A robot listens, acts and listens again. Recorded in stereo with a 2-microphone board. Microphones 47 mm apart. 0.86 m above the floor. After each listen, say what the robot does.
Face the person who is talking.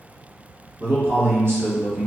Turn 50° right.
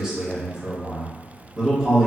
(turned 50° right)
Turn 15° right.
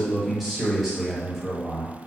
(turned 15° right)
Found it: a man speaking, straight ahead, 1 to 2 m away.